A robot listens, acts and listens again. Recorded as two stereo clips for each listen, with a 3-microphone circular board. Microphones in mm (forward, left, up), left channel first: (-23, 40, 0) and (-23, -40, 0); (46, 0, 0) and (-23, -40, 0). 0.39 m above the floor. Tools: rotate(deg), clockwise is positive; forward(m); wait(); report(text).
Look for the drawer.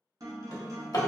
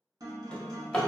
rotate(-105)
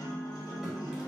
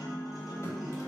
wait()
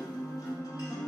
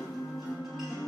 wait()
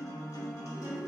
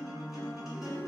report("Facing where the drawer came from. I can't hear it now.")